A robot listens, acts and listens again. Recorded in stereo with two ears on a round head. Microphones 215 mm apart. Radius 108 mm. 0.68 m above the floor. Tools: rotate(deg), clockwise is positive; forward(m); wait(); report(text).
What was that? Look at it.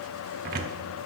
rotate(40)
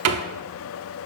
rotate(95)
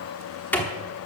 rotate(-10)
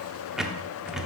report("Facing the cupboard door.")